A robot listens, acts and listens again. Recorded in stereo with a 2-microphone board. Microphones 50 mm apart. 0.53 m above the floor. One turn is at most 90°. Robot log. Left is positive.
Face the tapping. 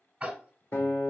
note: The tapping: about 25° right or 155° right.
cmd yaw -25
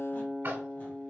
note: So it is at 130° right.
cmd yaw -90
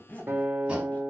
note: Nothing new. It was at 40° right.
cmd yaw -40
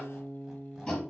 note: The tapping is now 15° left.
cmd yaw +15
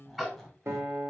end: Found it: tapping, straight ahead, 1 to 2 m away.